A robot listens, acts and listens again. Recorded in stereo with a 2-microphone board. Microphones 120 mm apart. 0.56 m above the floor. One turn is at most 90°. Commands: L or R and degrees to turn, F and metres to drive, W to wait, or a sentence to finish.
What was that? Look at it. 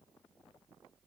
W
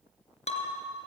L70
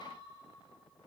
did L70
W
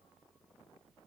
I heard breaking glass, but can't make it out now. It was about straight ahead or 40° left.